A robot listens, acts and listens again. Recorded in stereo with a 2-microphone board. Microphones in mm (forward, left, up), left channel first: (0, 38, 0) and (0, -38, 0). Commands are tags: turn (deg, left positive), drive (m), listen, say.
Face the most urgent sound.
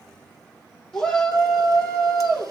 <turn deg="30"/>
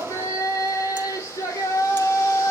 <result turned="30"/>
<turn deg="140"/>
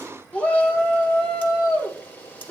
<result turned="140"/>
<turn deg="20"/>
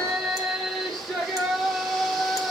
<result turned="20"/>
<say>Found it: a shout, straight ahead, 2 to 4 m away.</say>